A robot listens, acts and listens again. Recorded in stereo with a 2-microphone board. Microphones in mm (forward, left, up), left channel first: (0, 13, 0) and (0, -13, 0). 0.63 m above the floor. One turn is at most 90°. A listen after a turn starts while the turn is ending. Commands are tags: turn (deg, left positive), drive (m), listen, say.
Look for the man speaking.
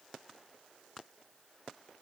<listen/>
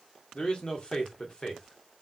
<turn deg="40"/>
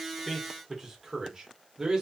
<turn deg="-15"/>
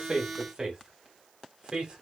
<turn deg="-20"/>
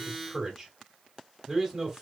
<say>Facing the man speaking.</say>